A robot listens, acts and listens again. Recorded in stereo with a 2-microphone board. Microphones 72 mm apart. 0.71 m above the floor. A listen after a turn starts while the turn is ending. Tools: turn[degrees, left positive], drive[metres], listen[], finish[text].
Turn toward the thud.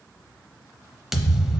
Action: turn[-30]
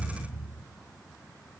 Thought: So it is at 145° right.
Action: turn[-145]
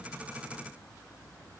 Action: finish[I heard a thud from this way, but can't make it out now.]